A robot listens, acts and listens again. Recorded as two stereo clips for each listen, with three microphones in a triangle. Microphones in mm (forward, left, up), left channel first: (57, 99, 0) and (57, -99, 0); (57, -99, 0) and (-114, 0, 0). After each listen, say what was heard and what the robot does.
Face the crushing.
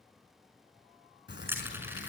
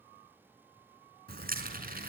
The crushing: 170° right. Turn 170° right.
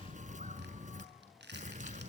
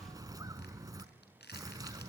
The crushing is now 60° right. Turn 60° right.
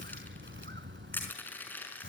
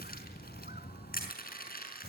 The crushing is now 10° left. Turn 10° left.
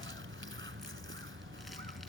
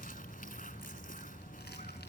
Keep listening.
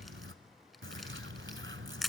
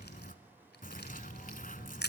Facing the crushing, over 4 m away.